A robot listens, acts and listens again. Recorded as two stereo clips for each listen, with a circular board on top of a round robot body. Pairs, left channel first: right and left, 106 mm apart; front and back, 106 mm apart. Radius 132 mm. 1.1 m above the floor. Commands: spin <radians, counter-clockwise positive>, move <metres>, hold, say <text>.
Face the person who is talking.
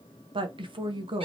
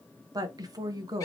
spin 2.27
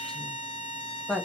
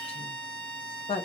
say Found it: a woman speaking, straight ahead, 1 to 2 m away.